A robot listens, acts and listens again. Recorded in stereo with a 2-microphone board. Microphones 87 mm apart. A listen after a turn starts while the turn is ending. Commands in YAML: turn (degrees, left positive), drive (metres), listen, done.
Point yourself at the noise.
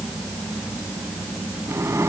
turn: -30
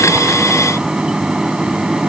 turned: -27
turn: -10
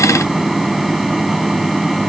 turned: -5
done: "Found it: a microwave, straight ahead."